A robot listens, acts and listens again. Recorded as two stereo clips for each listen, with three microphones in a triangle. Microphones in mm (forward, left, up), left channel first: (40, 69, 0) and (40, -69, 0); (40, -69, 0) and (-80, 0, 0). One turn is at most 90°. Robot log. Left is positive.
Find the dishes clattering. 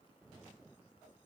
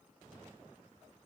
cmd idle
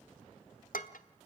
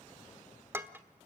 note: The dishes clattering: 75° left.
cmd yaw +75
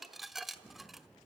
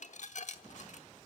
end: Found it: dishes clattering, straight ahead, 1 to 2 m away.